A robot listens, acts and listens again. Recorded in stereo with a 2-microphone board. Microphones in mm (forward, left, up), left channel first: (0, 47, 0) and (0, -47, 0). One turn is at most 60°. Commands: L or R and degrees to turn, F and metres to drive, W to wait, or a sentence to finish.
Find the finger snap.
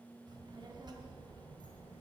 W
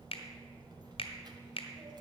L60
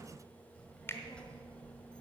L25
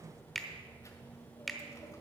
Facing the finger snap, 1 to 2 m away.